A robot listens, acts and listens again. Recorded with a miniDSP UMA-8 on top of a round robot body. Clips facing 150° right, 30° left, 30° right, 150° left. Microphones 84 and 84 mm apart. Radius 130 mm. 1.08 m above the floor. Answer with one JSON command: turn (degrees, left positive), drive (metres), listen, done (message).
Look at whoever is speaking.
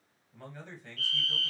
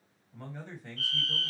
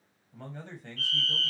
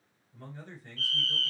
{"turn": -45}
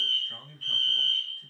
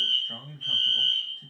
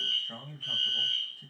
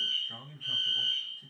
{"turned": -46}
{"done": "Found it: a man speaking, straight ahead."}